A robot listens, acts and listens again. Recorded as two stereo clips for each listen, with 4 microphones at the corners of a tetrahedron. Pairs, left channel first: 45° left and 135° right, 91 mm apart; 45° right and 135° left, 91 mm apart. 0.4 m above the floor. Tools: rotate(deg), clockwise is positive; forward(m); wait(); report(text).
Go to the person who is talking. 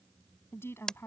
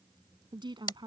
rotate(-105)
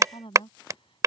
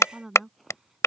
rotate(-50)
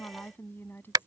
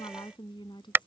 rotate(20)
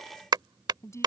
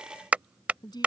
rotate(10)
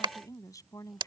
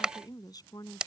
forward(1.0)
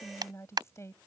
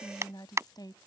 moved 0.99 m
rotate(10)
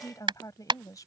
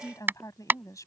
forward(1.0)
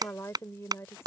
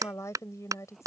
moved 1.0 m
forward(1.0)
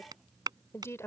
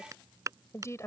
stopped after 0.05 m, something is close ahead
report("I am next to the woman speaking.")